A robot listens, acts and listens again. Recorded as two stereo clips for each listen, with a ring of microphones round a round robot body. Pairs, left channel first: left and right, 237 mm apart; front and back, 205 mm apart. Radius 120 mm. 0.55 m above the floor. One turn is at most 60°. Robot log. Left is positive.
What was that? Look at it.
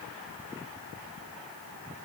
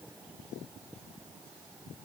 cmd idle
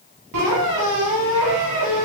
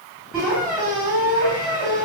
note: The squeak: 90° right.
cmd yaw -60
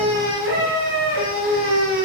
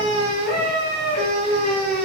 note: The squeak is now 50° right.
cmd yaw -50
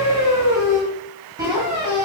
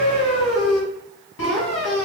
note: The squeak is now 15° right.
cmd yaw -15
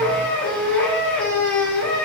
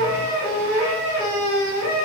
end: Found it: a squeak, straight ahead.